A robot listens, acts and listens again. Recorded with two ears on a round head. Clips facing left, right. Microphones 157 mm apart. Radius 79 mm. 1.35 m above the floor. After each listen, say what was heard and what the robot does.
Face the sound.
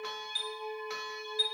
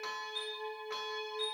The chime: about 45° left or 135° left. Turn 45° left.
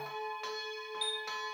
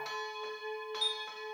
Facing the chime, 1 to 2 m away.